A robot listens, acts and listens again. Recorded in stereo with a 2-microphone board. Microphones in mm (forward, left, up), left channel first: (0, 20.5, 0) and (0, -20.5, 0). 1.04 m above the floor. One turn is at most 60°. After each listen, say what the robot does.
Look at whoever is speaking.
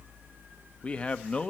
Turn 25° left.
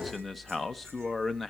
Found it: a man speaking, straight ahead.